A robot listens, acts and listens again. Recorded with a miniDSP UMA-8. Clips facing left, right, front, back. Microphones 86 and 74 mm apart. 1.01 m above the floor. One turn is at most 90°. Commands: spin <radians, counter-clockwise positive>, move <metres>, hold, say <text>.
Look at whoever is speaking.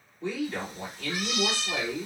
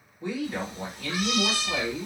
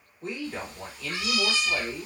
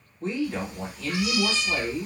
spin -1.57
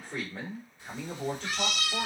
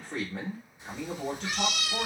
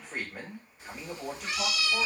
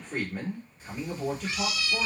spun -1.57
spin -1.40
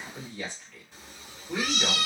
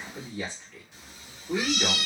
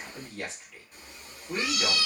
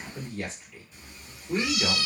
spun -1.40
spin -0.44
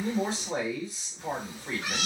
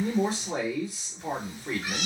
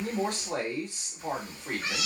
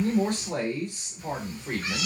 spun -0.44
say Facing the man speaking, 2 to 4 m away.